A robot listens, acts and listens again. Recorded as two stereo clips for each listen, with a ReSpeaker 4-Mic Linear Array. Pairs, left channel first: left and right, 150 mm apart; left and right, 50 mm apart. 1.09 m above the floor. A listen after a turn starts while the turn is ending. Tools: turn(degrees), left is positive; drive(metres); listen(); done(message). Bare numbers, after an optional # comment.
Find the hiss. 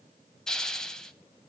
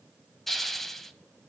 turn(30)
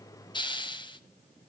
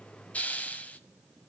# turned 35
# So it is at 140° left.
turn(140)
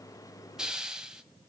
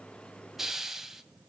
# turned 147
done("Facing the hiss.")